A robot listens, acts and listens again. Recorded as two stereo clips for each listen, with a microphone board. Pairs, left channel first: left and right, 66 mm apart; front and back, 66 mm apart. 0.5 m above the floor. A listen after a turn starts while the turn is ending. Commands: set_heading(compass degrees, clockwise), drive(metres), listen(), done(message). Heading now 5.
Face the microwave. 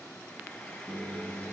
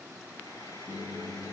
set_heading(25)
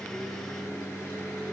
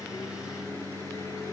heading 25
done("Facing the microwave.")